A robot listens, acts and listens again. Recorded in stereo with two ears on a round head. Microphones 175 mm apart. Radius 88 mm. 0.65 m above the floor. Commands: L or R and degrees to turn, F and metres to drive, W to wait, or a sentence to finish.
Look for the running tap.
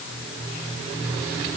W
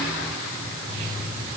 W
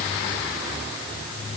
I can't make out a running tap.